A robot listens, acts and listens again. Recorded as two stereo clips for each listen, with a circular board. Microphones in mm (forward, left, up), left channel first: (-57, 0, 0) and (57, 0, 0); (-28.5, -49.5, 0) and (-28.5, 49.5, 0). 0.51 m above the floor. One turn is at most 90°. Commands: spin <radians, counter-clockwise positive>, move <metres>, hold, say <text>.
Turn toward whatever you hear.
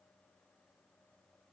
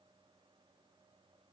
hold
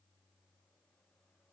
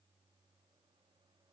hold
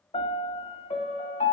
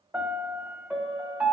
spin 1.57
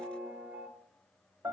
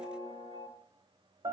spin 1.31
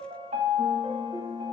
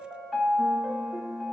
say Facing the piano.